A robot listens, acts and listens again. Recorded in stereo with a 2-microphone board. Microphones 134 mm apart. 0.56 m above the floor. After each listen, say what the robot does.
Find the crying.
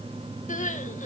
Turn 70° left.
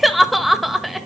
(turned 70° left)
Found it: crying, straight ahead, 1 to 2 m away.